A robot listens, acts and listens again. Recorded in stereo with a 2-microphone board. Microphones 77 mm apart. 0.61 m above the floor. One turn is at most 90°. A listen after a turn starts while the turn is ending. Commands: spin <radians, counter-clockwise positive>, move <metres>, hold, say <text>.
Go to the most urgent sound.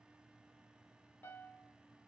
hold
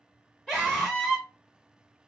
spin 0.52
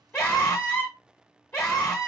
spin 1.57
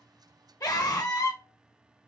spin 0.96
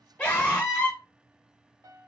spin 0.35
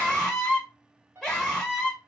move 1.0
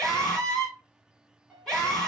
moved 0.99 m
spin 0.17
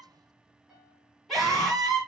move 1.0
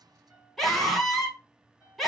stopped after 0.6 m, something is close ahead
say I am next to the scream.